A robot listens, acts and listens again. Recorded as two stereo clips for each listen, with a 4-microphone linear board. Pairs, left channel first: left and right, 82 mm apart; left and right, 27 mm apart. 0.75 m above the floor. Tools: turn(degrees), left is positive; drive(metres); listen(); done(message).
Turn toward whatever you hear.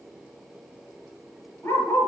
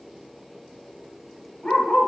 turn(degrees=35)
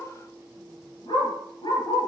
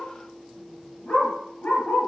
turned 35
turn(degrees=105)
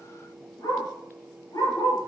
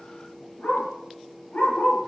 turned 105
turn(degrees=40)
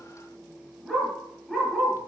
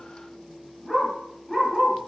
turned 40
done("Found it: a dog barking, straight ahead.")